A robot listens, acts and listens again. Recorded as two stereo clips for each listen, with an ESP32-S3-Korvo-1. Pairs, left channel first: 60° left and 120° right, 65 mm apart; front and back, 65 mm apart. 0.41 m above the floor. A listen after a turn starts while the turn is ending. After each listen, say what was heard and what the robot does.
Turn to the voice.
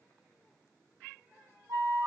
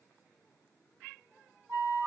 Keep listening.
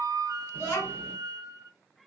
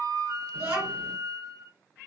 The child speaking: 110° left. Turn 110° left.
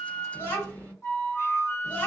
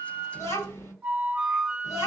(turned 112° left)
Found it: a child speaking, straight ahead.